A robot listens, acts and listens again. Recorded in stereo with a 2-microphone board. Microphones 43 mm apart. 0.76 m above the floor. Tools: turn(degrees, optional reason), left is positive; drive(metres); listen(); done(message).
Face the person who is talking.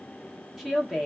turn(degrees=-30)
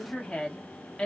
turn(degrees=20, reason="So it is at 20° left.")
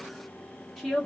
done("Found it: a woman speaking, straight ahead, 1 to 2 m away.")